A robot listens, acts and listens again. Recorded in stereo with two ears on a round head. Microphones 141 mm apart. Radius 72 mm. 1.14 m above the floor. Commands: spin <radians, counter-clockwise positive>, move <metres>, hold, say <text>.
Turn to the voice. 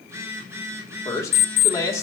spin 0.35
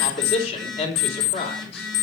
spin 2.44
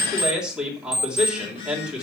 say Found it: a man speaking, straight ahead, 2 to 4 m away.